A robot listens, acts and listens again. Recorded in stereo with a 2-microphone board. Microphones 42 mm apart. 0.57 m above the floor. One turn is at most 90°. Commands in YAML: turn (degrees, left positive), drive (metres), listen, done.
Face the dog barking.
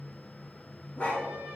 turn: 30
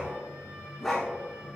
turn: 10
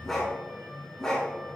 turn: 15
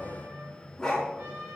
turn: 15
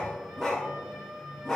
done: "Found it: a dog barking, straight ahead, 2 to 4 m away."